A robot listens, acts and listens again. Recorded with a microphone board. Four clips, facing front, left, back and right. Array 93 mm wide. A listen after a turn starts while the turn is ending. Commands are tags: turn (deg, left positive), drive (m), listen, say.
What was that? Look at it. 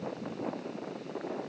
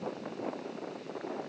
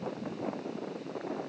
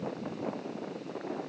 <listen/>
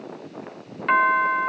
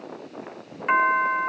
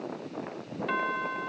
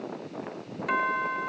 <turn deg="30"/>
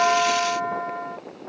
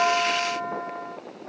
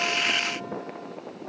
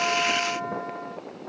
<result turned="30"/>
<say>Found it: a doorbell, straight ahead.</say>